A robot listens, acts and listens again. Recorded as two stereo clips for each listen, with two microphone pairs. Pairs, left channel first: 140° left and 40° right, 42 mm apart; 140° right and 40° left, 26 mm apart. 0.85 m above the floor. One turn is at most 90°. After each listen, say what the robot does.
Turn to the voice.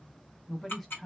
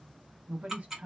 Turn 50° left.
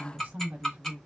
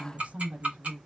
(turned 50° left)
Found it: a woman speaking, straight ahead.